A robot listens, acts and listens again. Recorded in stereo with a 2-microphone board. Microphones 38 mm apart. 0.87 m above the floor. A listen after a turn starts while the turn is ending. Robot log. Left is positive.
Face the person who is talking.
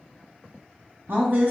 note: The woman speaking: about 55° right or 125° right.
cmd yaw -55
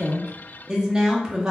note: So it is at 20° right.
cmd yaw -20
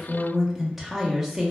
end: Found it: a woman speaking, straight ahead.